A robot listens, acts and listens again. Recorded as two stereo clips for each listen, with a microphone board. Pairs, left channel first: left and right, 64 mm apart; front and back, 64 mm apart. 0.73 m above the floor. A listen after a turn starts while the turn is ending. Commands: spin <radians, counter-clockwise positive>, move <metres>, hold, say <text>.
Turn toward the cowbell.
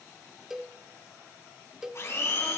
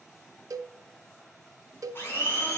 spin -2.97
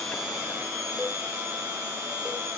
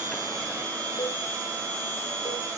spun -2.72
spin -0.17
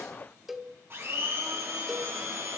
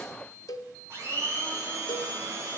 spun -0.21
say Facing the cowbell, under 1 m away.